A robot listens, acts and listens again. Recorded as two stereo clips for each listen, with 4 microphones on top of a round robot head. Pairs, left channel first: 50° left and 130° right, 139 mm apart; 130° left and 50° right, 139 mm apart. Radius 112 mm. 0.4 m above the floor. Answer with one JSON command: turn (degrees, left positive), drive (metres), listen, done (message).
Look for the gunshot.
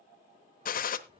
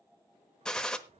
{"turn": 45}
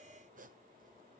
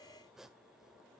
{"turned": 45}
{"done": "Facing where the gunshot came from. I can't hear it now."}